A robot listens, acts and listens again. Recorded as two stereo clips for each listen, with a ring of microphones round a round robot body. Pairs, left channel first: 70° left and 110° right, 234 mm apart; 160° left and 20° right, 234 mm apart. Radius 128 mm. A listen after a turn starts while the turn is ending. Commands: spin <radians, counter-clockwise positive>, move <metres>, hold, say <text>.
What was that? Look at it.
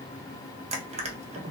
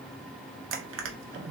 spin -0.87
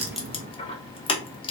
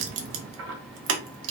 say Found it: crushing, straight ahead, under 1 m away.